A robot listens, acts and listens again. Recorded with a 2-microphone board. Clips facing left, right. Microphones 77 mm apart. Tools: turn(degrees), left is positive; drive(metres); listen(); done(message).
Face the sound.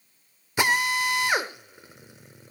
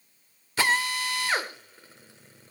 turn(degrees=15)
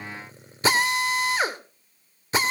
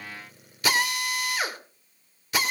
turn(degrees=150)
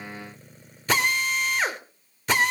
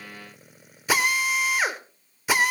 turn(degrees=-10)
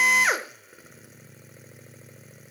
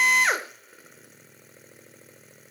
done("Found it: a drill, straight ahead, 2 to 4 m away.")